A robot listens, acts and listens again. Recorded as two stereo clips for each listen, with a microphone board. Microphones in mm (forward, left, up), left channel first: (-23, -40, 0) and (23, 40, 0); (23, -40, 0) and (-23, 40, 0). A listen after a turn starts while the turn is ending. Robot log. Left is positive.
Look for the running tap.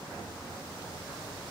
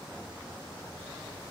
cmd idle
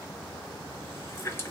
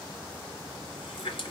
note: The running tap: 55° right.
cmd yaw -55
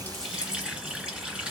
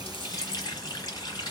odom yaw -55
note: The running tap is now 15° right.
cmd yaw -15
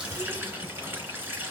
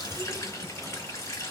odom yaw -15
end: Found it: a running tap, straight ahead.